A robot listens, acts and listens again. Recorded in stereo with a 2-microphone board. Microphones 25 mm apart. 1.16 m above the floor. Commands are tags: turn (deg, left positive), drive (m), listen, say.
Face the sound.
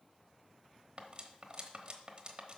<turn deg="-40"/>
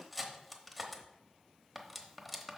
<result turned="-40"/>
<say>Found it: cutlery clinking, straight ahead.</say>